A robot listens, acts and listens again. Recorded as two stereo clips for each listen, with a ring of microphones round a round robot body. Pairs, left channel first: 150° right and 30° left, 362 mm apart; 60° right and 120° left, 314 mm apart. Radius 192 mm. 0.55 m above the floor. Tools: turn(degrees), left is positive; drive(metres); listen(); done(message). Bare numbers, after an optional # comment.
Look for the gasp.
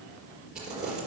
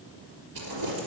listen()
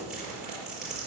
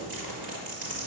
listen()
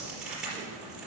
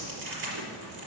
done("I can't make out a gasp, only crumpling.")